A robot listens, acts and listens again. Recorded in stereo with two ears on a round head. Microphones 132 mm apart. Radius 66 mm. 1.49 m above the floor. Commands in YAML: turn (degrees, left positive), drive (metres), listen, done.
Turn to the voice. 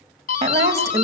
turn: -20
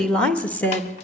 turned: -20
turn: 15
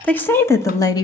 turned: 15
turn: 25
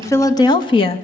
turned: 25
turn: 35
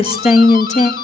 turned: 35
turn: 50
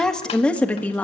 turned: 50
turn: 10
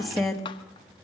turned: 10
done: "Facing the woman speaking, 2 to 4 m away."